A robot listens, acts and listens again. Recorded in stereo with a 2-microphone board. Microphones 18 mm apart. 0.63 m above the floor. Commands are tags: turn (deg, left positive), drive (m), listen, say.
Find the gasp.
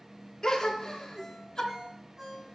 <turn deg="35"/>
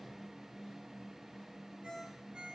<listen/>
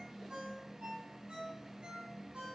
<say>I heard a gasp, but can't make it out now. It was about straight ahead or 110° left.</say>